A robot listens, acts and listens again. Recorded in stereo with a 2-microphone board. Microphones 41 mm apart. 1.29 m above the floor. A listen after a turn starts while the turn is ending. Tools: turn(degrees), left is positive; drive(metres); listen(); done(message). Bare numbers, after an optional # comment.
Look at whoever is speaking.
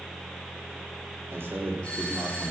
# The man speaking: about 60° right or 120° right.
turn(-60)
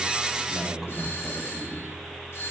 done("Facing the man speaking, 2 to 4 m away.")